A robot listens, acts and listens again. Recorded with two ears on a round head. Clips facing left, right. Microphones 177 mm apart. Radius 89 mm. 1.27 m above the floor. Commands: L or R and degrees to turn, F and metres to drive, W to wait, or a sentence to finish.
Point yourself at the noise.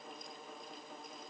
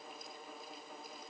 W
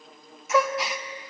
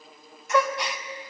L30
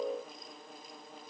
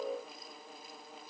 W
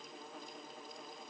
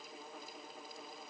I heard a gasp, but can't make it out now. It was about 30° right or 150° left.